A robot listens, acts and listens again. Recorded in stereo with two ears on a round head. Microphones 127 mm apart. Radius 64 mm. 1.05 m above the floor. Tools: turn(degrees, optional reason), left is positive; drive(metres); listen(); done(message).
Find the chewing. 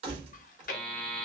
turn(degrees=60, reason="The chewing: about 60° left or 120° left.")
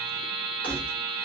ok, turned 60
listen()
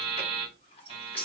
listen()
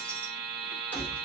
done("I heard chewing, but can't make it out now. It was about straight ahead or 60° left.")